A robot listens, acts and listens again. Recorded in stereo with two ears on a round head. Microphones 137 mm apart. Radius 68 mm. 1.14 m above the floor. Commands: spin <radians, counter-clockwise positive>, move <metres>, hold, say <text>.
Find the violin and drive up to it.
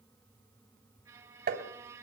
spin -0.44
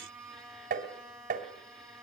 move 1.0
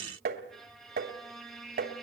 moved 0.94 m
move 1.0
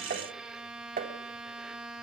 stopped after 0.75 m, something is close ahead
say Arrived at the violin, straight ahead.